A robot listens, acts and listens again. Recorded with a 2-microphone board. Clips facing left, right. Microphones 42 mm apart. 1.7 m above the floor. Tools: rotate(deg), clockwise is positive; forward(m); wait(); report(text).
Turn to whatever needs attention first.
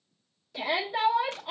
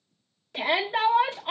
rotate(50)
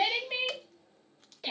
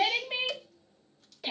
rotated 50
report("Found it: a shout, straight ahead.")